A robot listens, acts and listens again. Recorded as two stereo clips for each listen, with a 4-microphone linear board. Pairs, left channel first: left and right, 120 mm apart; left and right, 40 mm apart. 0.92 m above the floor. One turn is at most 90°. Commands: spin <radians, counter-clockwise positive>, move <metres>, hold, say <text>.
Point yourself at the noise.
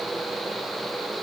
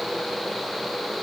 hold
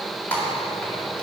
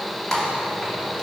spin 0.52
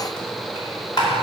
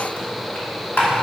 spin 1.57
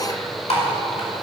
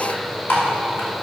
spin 1.13
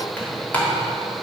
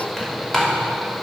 spin 0.26
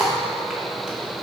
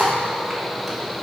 hold
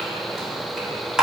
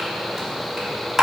say Found it: typing on a keyboard, straight ahead, 2 to 4 m away.